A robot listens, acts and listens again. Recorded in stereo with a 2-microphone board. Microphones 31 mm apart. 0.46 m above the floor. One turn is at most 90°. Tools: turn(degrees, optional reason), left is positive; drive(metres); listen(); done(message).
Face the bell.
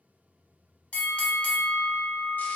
turn(degrees=45, reason="The bell: about 45° left or 135° left.")
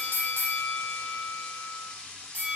turn(degrees=80, reason="So it is at 80° left.")
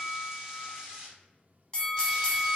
turn(degrees=30, reason="The bell is now 30° left.")
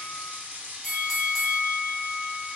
done("Facing the bell, under 1 m away.")